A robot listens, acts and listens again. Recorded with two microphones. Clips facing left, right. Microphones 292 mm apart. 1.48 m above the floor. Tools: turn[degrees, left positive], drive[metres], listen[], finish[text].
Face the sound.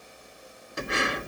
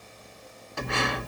Thought: The breathing: about 20° left or 160° left.
Action: turn[20]
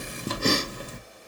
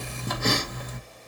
Thought: So it is at 140° left.
Action: turn[140]
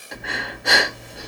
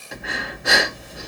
Action: finish[Facing the breathing, 1 to 2 m away.]